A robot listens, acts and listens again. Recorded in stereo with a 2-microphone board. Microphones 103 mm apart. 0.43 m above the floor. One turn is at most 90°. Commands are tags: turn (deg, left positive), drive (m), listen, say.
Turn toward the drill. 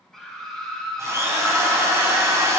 <turn deg="-30"/>
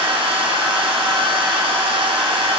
<turn deg="-90"/>
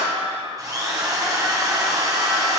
<turn deg="-40"/>
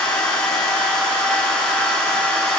<turn deg="10"/>
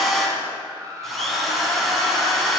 <say>Facing the drill, 1 to 2 m away.</say>